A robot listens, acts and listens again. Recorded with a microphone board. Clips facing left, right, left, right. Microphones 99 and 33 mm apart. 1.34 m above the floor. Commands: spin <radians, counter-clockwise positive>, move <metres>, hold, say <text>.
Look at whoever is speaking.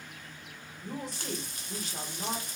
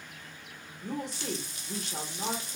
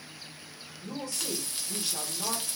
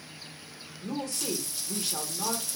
spin -1.13
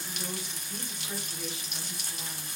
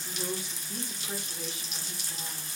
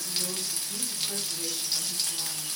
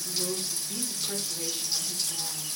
spin -0.87
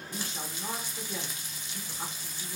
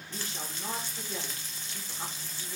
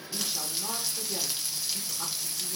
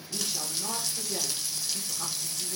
say Facing the woman speaking.